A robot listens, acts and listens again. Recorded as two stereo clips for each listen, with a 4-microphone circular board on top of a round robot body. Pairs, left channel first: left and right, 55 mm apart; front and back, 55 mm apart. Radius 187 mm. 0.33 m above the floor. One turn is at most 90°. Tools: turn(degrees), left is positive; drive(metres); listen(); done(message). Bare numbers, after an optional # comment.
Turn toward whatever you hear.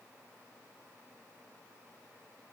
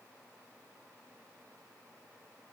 listen()
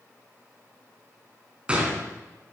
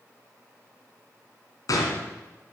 # The gunshot: 20° right.
turn(-20)
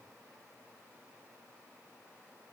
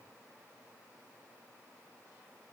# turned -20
done("I heard a gunshot from this way, but can't make it out now.")